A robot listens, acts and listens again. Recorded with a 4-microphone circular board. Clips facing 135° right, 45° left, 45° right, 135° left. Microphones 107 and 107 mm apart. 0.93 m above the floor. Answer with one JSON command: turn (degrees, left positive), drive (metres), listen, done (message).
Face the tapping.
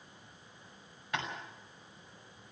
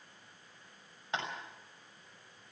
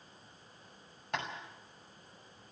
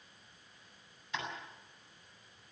{"turn": -20}
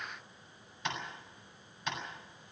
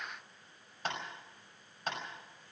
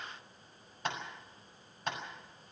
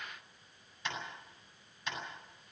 {"done": "Facing the tapping, over 4 m away."}